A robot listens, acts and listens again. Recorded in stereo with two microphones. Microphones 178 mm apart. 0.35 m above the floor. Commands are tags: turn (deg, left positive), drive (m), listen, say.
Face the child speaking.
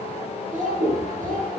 <turn deg="-55"/>
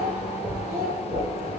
<turn deg="-60"/>
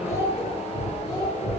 <turn deg="20"/>
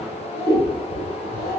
<turn deg="15"/>
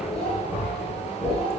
<listen/>
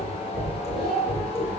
<say>Facing the child speaking.</say>